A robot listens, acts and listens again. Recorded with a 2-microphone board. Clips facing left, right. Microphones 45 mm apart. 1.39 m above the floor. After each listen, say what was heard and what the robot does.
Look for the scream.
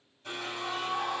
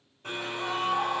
The scream: about 60° right or 120° right. Turn 60° right.
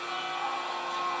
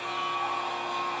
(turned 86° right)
So it is at 25° left. Turn 25° left.
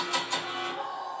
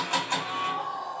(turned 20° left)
Facing the scream, 1 to 2 m away.